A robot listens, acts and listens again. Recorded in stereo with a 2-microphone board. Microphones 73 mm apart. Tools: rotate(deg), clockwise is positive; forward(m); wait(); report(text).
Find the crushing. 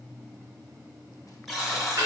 wait()
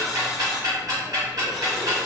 wait()
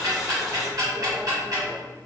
report("I can't make out crushing, only ticking and a buzzer.")